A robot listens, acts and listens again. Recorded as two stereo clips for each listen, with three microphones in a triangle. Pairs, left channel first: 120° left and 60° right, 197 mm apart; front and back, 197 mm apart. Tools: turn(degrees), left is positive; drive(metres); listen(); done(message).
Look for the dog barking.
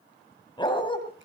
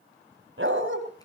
turn(degrees=-175)
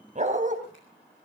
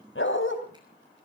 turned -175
turn(degrees=-10)
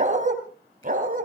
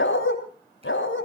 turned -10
turn(degrees=-15)
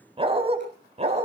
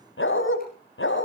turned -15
done("Found it: a dog barking, straight ahead.")